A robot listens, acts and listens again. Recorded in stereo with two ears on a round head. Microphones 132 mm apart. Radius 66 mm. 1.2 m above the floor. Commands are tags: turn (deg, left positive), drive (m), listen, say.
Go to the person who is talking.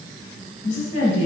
<turn deg="90"/>
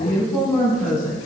<turn deg="10"/>
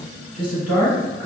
<drive m="1.0"/>
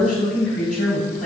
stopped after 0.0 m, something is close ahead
<say>Something is in my way. I am facing the woman speaking but have not reached it.</say>